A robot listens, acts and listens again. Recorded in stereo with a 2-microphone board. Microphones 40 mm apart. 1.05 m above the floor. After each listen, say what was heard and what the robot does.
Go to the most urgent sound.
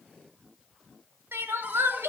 Turn 90° right.
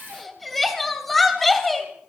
Drive 1.0 m forward.
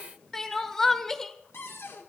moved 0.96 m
The crying is now 10° left. Turn 10° left.
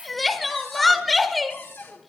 Drive 1.0 m forward.
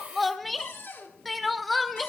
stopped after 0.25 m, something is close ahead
I am next to the crying.